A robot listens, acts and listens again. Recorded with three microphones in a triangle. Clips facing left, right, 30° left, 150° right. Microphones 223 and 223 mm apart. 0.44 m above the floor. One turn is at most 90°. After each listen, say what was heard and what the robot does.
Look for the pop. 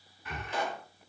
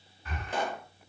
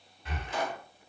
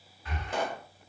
The pop: 125° right. Turn 90° right.
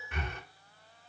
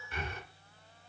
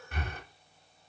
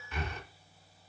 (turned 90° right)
Nothing new. It was at 35° right. Turn 35° right.
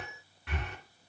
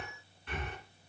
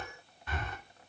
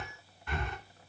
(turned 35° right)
I heard a pop from this way, but can't make it out now.